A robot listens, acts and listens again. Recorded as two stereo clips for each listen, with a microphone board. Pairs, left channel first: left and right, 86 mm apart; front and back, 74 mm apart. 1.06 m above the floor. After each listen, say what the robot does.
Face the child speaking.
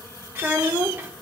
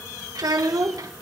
Turn 155° right.
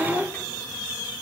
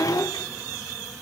Turn 25° left.
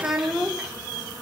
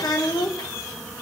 Found it: a child speaking, straight ahead.